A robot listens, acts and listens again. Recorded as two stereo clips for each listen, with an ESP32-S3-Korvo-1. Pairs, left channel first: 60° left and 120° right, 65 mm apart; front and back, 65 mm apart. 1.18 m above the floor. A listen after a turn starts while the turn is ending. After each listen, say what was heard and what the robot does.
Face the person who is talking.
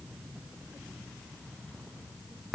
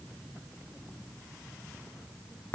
Keep listening.
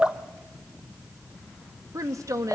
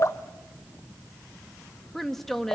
The woman speaking: 85° right. Turn 85° right.
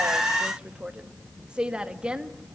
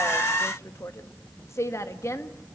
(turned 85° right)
The woman speaking is now 45° right. Turn 45° right.
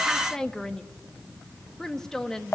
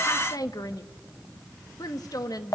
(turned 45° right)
The woman speaking is now 20° right. Turn 20° right.
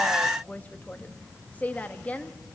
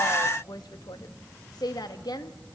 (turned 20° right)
Facing the woman speaking.